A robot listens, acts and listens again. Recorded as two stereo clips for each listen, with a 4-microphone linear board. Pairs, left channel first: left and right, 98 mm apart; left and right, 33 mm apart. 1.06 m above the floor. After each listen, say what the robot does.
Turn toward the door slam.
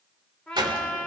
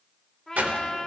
Turn 50° right.
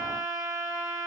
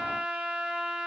Keep listening.
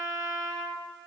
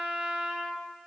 I heard a door slam, but can't make it out now. It was about straight ahead or 80° right.